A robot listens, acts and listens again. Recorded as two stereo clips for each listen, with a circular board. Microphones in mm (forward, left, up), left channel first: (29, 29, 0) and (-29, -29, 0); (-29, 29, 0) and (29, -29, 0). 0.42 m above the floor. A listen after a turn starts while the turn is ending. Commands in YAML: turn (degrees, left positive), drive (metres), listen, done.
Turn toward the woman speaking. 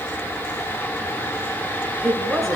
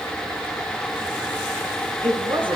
turn: -45
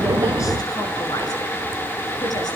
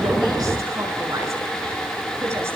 listen: true
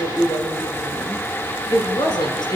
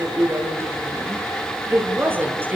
turn: 20
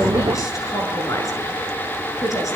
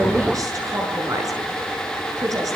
done: "Facing the woman speaking."